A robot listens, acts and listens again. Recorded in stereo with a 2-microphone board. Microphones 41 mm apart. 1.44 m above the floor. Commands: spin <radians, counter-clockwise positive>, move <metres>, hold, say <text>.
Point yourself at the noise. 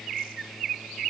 hold
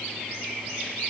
hold
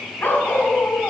spin 0.79
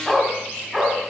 spin -0.17
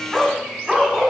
spin -0.26
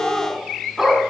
spin -0.17
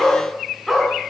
say Facing the dog barking.